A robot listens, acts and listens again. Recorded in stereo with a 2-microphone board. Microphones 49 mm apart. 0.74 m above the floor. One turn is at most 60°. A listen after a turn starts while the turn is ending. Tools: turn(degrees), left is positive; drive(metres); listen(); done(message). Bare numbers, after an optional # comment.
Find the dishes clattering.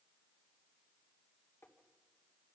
listen()
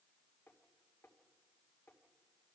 listen()
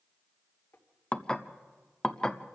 # The dishes clattering: about 15° left or 165° left.
turn(15)
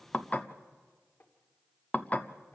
# So it is at 150° left.
turn(60)
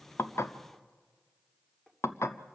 # The dishes clattering is now 100° left.
turn(60)
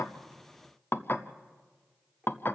# The dishes clattering is now 50° left.
turn(50)
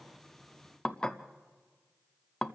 # The dishes clattering is now 20° left.
turn(20)
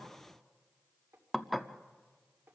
done("Facing the dishes clattering.")